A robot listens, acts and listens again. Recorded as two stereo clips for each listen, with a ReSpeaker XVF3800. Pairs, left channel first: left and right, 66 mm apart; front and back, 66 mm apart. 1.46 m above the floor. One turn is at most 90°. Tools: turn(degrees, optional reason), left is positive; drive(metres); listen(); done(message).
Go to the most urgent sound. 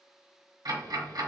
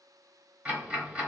listen()
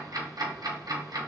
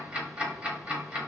listen()
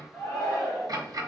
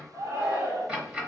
turn(degrees=90, reason="The shout: 170° left.")
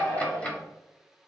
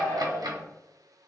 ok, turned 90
turn(degrees=80, reason="The shout is now 80° left.")
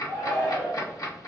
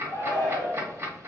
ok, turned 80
turn(degrees=40, reason="The shout is now 40° left.")
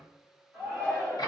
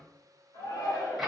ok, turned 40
turn(degrees=10, reason="The shout is now 10° left.")
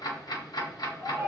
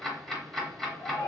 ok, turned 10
drive(metres=1.0)
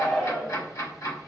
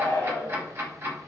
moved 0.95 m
drive(metres=1.0)
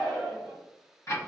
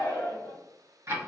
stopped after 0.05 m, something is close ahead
done("Arrived at the shout, straight ahead.")